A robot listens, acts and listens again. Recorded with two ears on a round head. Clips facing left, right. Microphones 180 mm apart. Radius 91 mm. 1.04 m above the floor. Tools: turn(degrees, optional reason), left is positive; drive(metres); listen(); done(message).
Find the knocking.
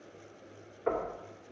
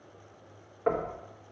turn(degrees=-60, reason="The knocking: about 60° right or 120° right.")
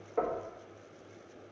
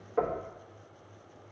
done("Facing the knocking.")